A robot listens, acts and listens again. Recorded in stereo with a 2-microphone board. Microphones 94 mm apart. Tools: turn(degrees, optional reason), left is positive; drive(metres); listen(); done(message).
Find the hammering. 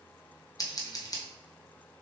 listen()
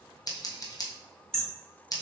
turn(degrees=30)
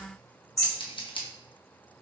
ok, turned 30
turn(degrees=145, reason="So it is at 145° left.")
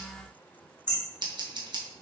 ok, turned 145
turn(degrees=-20, reason="The hammering is now 20° right.")
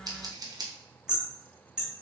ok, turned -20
turn(degrees=-10, reason="The hammering is now 10° right.")
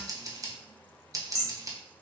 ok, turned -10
done("Facing the hammering, 1 to 2 m away.")